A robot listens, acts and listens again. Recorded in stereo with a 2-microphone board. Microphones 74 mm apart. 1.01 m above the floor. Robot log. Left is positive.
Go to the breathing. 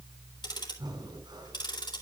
cmd yaw -90
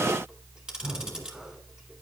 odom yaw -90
note: So it is at 10° right.
cmd yaw -10
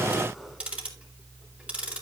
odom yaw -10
cmd idle
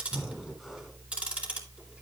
cmd fwd 1.0
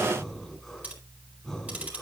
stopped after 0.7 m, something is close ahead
end: Blocked. The breathing is further on, straight ahead.